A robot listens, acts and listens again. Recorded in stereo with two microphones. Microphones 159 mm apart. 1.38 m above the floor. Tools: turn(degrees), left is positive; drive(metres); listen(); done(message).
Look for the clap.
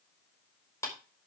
turn(degrees=15)
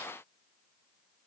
listen()
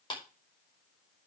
turn(degrees=150)
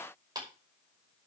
turn(degrees=-25)
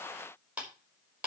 turn(degrees=-10)
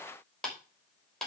done("Found it: a clap, straight ahead.")